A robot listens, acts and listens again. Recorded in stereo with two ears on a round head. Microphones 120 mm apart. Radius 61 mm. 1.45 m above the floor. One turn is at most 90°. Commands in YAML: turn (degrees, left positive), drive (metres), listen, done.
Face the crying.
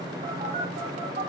listen: true
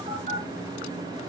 listen: true
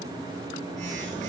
done: "I can't make out crying, only a phone buzzing."